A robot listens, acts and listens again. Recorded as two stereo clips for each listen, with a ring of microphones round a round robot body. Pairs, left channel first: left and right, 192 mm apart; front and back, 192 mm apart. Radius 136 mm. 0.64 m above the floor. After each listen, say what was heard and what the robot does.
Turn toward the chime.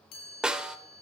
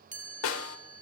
The chime: 130° left. Turn 130° left.
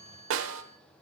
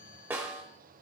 The chime is now 40° left. Turn 40° left.
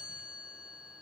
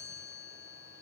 Found it: a chime, straight ahead, 2 to 4 m away.